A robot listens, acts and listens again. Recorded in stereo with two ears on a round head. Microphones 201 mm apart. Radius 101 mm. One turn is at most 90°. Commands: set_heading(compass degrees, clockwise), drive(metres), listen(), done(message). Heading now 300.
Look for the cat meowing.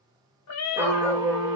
set_heading(210)
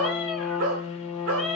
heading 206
done("Facing the cat meowing.")